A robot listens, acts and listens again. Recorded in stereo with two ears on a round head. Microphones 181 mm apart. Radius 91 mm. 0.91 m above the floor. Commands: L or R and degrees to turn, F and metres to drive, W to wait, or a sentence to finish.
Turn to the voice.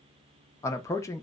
L30
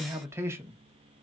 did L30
R15
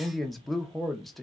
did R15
Found it: a man speaking, straight ahead, under 1 m away.